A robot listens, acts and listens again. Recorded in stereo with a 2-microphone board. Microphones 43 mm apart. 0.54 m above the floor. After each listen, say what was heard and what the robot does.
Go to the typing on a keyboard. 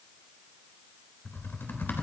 The typing on a keyboard: about 55° left or 125° left. Turn 55° left.
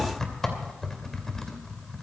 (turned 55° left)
So it is at 10° left. Turn 10° left.
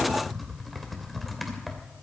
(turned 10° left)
Drive 1.0 m forward.
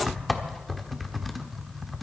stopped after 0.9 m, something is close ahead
I am next to the typing on a keyboard.